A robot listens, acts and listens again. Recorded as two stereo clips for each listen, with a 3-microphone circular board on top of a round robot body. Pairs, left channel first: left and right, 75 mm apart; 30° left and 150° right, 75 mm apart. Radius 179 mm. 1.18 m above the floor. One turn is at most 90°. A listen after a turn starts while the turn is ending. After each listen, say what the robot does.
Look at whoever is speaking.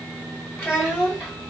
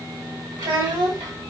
Turn 90° right.
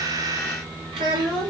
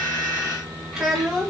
Turn 55° right.
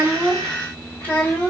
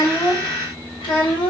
Turn 25° left.
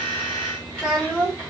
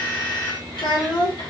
Turn 20° left.
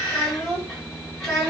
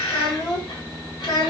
Found it: a child speaking, straight ahead.